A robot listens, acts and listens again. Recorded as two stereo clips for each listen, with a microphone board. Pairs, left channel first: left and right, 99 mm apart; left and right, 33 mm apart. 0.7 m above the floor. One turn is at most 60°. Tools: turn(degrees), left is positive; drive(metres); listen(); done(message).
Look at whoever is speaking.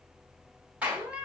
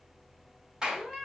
listen()
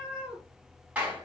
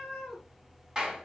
listen()
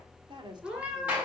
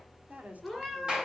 turn(degrees=-50)
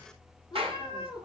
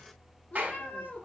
listen()
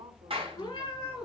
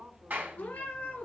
turn(degrees=-60)
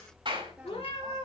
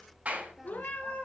turn(degrees=-10)
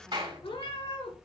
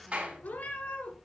listen()
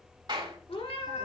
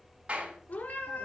done("Facing where the woman speaking came from. I can't hear it now.")